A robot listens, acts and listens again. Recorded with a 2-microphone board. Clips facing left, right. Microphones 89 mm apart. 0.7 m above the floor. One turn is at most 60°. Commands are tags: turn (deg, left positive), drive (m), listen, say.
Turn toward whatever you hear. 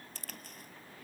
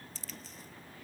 <turn deg="55"/>
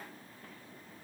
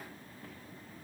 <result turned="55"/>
<listen/>
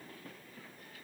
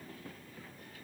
<say>I heard a crack, but can't make it out now. It was about straight ahead or 70° left.</say>